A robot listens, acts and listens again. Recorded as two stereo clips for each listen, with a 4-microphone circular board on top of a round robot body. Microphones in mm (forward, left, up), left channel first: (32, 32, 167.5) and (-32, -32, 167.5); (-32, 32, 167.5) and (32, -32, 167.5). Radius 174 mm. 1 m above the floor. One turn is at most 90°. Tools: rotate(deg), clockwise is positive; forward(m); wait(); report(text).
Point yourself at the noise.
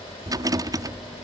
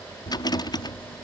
rotate(-90)
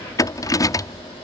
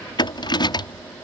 rotate(-90)
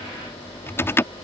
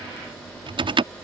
rotate(20)
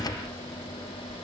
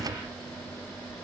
report("Facing the rattle.")